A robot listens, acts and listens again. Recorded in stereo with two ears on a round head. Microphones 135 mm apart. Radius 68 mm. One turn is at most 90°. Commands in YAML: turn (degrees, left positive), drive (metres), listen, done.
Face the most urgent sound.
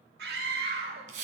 turn: -90
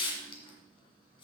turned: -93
listen: true
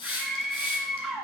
done: "Facing the scream."